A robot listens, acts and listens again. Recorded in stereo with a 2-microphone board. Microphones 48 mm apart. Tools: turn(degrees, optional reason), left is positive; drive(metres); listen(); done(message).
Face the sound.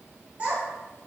turn(degrees=-25, reason="The child speaking: about 25° right or 155° right.")
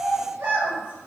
turn(degrees=-130, reason="So it is at 130° right.")
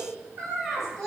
done("Found it: a child speaking, straight ahead, 1 to 2 m away.")